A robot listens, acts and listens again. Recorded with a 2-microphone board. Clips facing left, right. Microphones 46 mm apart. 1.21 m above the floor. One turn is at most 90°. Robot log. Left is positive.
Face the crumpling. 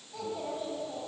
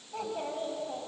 cmd idle
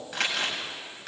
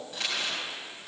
cmd yaw +90
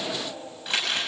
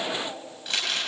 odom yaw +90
note: So it is at 10° left.
cmd yaw +10
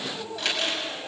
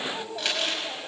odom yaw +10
end: Facing the crumpling.